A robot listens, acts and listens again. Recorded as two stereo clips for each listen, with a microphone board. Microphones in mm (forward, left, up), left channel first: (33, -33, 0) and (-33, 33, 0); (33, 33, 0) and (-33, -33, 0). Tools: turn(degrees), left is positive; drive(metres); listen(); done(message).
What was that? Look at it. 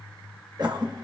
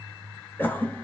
turn(degrees=110)
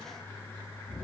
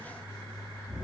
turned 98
turn(degrees=10)
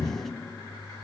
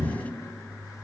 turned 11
done("Found it: a cough, straight ahead.")